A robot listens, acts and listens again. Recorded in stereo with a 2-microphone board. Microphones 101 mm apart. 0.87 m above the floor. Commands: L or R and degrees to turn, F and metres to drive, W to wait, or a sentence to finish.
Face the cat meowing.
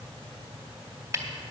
W
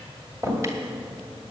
W
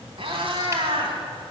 R65
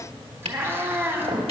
R25
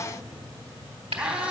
R15
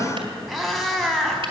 Facing the cat meowing.